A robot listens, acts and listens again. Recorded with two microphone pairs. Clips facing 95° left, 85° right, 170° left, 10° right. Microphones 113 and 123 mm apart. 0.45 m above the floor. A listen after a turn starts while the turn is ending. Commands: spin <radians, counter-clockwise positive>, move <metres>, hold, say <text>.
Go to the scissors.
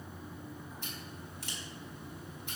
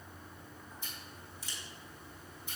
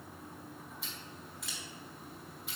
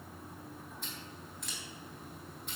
spin 1.40
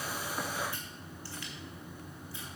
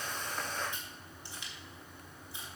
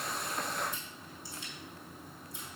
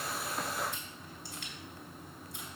spin -0.26
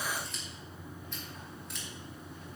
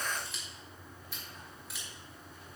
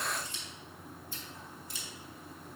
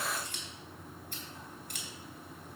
move 1.0
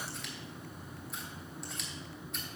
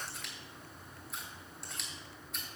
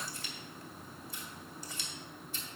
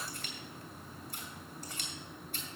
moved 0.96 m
move 1.0
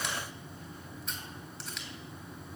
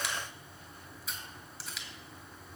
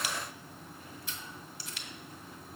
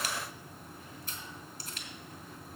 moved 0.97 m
move 1.0
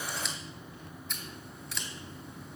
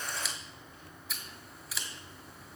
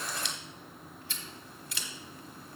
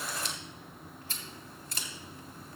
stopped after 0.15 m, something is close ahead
say Arrived at the scissors, straight ahead.